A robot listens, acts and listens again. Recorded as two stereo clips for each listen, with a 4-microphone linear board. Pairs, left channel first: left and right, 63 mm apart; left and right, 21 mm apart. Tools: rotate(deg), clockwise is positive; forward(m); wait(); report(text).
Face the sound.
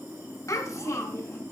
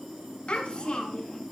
rotate(-50)
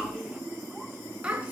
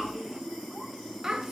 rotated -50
rotate(20)
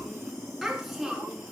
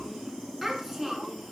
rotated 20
report("Facing the child speaking, over 4 m away.")